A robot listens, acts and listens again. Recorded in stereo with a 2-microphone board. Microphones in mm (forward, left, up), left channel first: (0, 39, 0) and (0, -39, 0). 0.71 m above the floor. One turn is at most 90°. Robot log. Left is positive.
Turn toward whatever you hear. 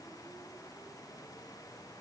cmd idle
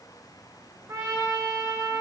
note: The trumpet: about 40° right or 140° right.
cmd yaw -40
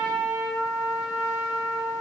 end: Facing the trumpet, 2 to 4 m away.